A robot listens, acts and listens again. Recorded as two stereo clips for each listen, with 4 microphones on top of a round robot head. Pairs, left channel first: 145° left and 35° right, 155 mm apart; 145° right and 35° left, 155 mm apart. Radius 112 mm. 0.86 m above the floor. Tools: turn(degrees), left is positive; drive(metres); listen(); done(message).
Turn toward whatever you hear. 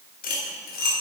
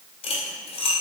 turn(degrees=165)
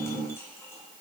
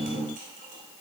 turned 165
listen()
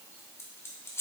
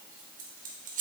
turn(degrees=70)
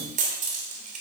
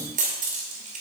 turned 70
done("Facing the cutlery clinking.")